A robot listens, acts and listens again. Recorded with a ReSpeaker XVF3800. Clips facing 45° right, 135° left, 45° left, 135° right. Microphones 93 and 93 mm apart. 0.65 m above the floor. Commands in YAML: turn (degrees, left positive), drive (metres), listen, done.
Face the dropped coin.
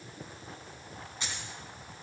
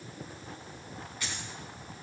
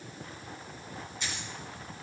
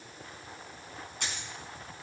turn: -110
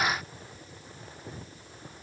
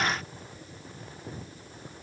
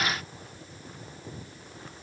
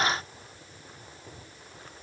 done: "Facing where the dropped coin came from. I can't hear it now."